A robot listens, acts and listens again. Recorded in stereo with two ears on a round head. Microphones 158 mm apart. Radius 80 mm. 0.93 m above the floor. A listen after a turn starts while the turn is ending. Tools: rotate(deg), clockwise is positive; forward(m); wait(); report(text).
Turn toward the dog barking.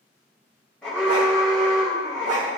rotate(45)
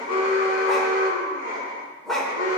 report("Found it: a dog barking, straight ahead.")